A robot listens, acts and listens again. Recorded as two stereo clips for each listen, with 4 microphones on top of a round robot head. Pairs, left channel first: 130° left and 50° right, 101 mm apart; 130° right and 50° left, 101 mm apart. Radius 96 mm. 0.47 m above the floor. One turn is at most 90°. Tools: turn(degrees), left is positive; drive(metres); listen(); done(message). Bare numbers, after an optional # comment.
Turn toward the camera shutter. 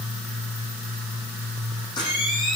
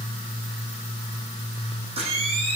# The camera shutter: 80° left.
turn(80)
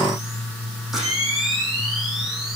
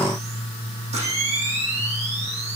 # The camera shutter is now 35° left.
turn(35)
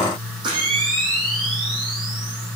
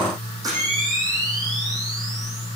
done("Found it: a camera shutter, straight ahead, over 4 m away.")